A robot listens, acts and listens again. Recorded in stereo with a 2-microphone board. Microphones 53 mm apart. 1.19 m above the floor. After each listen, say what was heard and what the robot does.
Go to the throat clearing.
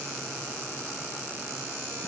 Keep listening.
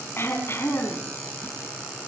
The throat clearing: about 45° left or 135° left. Turn 45° left.
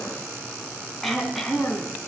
Drive 1.0 m forward.
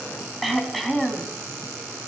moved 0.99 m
Drive 1.0 m forward.
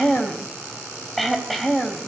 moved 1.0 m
Drive 1.0 m forward.
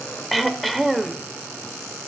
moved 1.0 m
Drive 1.0 m forward.
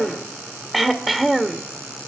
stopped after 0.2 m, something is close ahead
Arrived at the throat clearing, straight ahead.